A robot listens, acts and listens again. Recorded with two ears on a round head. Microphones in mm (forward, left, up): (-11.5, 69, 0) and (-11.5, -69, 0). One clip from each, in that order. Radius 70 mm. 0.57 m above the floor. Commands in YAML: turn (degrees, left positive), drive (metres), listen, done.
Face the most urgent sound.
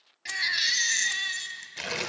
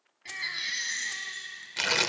turn: 60
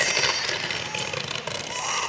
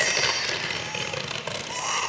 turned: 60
done: "Facing the baby crying, 1 to 2 m away."